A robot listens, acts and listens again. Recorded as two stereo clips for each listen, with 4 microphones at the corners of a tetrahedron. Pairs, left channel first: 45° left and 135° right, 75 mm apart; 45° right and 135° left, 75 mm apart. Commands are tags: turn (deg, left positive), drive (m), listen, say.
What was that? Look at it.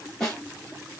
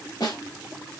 <turn deg="-40"/>
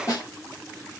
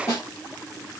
<say>Found it: a snare drum, straight ahead.</say>